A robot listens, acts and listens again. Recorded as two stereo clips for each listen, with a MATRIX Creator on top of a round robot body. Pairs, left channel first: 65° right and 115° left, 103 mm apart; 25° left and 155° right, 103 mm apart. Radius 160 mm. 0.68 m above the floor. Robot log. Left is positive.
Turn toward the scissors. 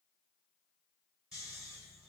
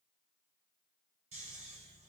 cmd idle
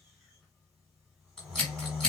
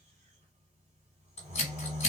note: The scissors: 20° left.
cmd yaw +20
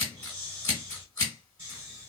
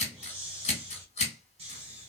end: Facing the scissors.